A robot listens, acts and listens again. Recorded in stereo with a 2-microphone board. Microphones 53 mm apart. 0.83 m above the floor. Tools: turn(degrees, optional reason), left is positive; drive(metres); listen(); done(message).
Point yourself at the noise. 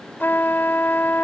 turn(degrees=40, reason="The trumpet: about 40° left or 140° left.")
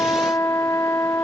turn(degrees=100, reason="So it is at 100° left.")
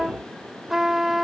done("Facing the trumpet.")